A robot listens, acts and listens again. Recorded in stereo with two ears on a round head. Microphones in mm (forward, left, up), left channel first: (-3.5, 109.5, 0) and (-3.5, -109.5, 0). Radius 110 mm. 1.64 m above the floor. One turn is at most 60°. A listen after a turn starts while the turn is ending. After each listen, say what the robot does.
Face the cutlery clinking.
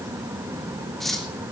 Turn 30° left.
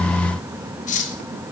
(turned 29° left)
Turn 60° left.
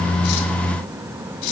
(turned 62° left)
Turn 60° left.
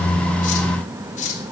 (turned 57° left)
Turn 30° left.
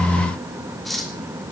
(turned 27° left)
Facing the cutlery clinking, 2 to 4 m away.